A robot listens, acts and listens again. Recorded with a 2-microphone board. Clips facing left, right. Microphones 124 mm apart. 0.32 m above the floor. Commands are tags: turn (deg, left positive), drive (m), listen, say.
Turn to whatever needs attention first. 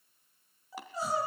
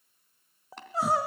<turn deg="-75"/>
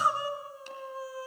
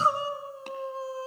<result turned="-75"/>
<turn deg="-30"/>
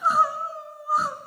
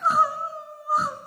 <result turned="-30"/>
<say>Facing the crying.</say>